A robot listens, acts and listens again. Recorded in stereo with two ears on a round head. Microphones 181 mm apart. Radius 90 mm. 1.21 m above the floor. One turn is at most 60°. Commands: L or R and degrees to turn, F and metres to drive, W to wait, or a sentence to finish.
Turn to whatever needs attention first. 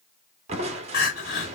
L50
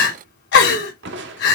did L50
L60
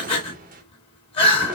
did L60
L30
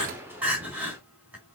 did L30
R10
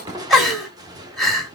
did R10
Found it: crying, straight ahead.